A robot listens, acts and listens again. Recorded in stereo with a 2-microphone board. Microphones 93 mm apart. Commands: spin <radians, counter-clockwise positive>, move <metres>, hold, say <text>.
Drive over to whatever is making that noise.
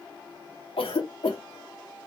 spin 1.57
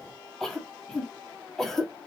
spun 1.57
move 1.0
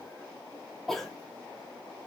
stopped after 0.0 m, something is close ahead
say Blocked. The cough is further on, straight ahead.